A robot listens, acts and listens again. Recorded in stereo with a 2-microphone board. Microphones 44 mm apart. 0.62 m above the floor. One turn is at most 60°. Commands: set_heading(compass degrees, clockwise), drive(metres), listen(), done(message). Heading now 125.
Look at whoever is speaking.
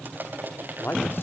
set_heading(70)
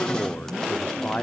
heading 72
set_heading(27)
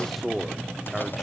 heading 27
done("Found it: a man speaking, straight ahead.")